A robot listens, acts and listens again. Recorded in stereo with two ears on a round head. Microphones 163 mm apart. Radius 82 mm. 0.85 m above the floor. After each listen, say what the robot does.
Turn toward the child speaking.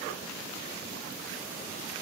Keep listening.
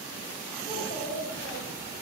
Turn 55° left.
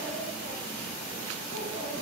Keep listening.
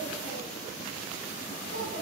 Turn 80° left.
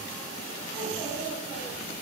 Turn 15° right.
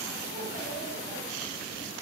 Keep listening.
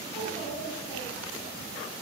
Facing the child speaking.